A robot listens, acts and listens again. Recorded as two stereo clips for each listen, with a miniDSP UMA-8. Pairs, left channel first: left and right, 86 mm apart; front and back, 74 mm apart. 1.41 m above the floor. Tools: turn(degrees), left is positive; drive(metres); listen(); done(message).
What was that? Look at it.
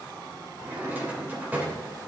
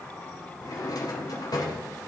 turn(degrees=-20)
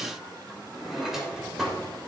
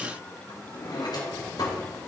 done("Facing the drawer.")